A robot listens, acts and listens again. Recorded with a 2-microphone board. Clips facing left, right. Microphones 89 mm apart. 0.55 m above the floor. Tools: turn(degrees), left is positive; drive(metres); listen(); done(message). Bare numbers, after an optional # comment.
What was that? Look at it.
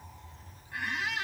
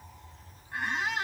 # The squeak: about 30° right or 150° right.
turn(-30)
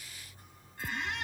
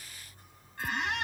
# So it is at 115° right.
turn(-115)
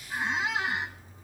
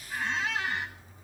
# The squeak is now 15° left.
turn(15)
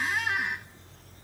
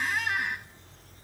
done("Facing the squeak.")